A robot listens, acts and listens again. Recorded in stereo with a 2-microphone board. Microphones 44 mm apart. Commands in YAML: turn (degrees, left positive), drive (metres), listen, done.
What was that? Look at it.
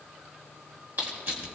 turn: -50
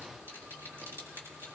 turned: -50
turn: -80
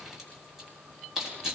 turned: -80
turn: -10
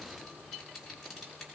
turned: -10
listen: true
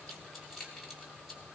done: "Facing the crushing, over 4 m away."